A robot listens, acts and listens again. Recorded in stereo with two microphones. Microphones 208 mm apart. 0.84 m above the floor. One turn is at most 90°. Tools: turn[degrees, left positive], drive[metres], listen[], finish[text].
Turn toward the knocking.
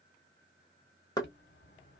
Thought: The knocking: about 20° left or 160° left.
Action: turn[20]
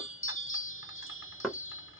Action: finish[Found it: knocking, straight ahead, under 1 m away.]